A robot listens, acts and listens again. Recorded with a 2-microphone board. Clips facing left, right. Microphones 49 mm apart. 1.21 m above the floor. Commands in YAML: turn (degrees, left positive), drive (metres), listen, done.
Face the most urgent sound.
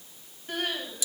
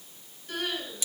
turn: 35
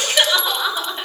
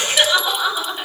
done: "Facing the crying, over 4 m away."